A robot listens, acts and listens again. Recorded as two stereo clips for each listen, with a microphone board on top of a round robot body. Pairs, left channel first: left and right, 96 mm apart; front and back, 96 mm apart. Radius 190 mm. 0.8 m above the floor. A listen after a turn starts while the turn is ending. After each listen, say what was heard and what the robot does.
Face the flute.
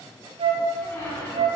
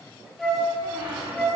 The flute: 85° right. Turn 85° right.
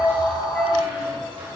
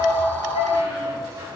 The flute is now 10° left. Turn 10° left.
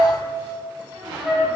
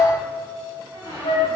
Found it: a flute, straight ahead, 1 to 2 m away.